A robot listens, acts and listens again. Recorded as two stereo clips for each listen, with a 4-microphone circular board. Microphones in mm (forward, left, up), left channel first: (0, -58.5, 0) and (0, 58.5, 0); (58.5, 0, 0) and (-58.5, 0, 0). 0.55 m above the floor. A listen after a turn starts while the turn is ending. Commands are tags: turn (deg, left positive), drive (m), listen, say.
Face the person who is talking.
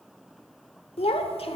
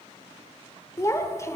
<turn deg="-60"/>
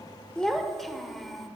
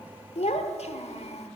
<say>Found it: a child speaking, straight ahead.</say>